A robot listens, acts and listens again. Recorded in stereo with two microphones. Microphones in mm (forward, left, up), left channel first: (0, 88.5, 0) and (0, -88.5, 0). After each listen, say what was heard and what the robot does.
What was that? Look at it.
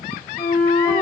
Turn 30° left.
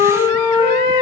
So it is at 25° right. Turn 25° right.
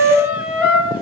The flute is now 10° right. Turn 10° right.
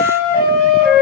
Facing the flute.